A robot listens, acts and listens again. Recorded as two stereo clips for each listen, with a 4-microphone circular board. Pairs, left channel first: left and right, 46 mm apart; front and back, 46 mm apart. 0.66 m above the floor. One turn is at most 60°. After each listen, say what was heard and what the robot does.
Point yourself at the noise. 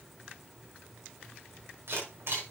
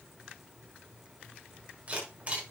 The camera shutter: 125° right. Turn 60° right.
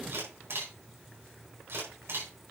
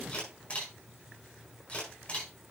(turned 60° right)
The camera shutter is now 60° right. Turn 60° right.
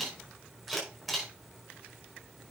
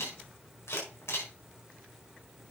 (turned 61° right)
Facing the camera shutter, over 4 m away.